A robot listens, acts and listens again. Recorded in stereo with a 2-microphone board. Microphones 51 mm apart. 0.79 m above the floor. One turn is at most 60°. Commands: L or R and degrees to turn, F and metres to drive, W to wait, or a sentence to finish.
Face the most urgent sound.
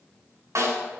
W
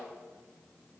W
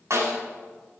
I can't make out anything urgent, only a snare drum.